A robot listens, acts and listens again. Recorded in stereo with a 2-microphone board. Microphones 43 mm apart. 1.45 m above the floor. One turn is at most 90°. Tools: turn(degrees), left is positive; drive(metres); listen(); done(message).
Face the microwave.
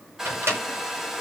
turn(degrees=-90)
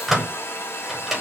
done("Found it: a microwave, straight ahead.")